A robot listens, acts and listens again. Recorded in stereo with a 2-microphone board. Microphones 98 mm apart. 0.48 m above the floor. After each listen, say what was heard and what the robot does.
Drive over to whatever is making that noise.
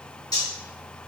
The cutlery clinking: about 40° left or 140° left. Turn 40° left.
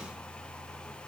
Keep listening.
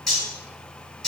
Drive 1.0 m forward.
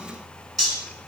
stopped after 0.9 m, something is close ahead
Arrived at the cutlery clinking, straight ahead.